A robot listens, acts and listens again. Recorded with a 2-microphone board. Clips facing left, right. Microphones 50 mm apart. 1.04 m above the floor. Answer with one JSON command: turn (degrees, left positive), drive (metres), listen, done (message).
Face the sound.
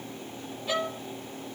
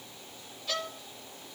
{"turn": 15}
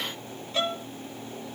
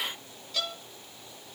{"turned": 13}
{"turn": 150}
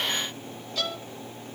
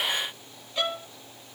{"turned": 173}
{"turn": -25}
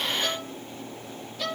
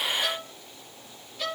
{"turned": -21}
{"done": "Facing the violin."}